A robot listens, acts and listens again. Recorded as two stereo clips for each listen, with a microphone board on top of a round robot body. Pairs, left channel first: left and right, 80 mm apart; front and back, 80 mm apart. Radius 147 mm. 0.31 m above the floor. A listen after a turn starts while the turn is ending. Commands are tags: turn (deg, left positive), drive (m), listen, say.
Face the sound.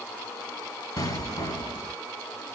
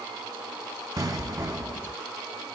<turn deg="130"/>
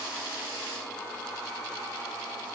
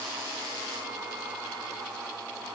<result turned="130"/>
<say>Facing where the explosion came from. I can't hear it now.</say>